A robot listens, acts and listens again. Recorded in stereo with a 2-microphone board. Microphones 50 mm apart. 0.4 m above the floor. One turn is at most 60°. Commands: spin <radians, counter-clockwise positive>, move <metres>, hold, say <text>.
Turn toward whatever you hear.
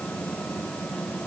hold
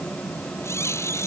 spin 1.05
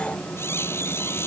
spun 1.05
spin 0.96
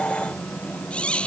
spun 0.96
spin 0.44
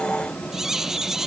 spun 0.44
spin -0.17
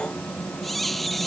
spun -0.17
say Facing the squeak.